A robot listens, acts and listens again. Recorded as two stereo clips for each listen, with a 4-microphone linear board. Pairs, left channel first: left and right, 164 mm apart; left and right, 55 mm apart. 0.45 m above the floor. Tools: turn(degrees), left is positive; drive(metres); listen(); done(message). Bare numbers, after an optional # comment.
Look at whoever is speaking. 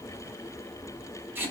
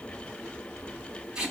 listen()
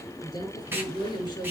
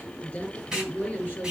# The woman speaking: about 25° left or 155° left.
turn(25)
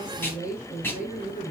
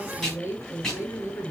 # So it is at 130° left.
turn(130)
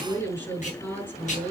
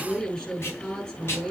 # The woman speaking is now 15° left.
turn(15)
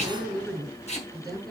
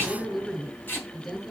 done("Found it: a woman speaking, straight ahead, over 4 m away.")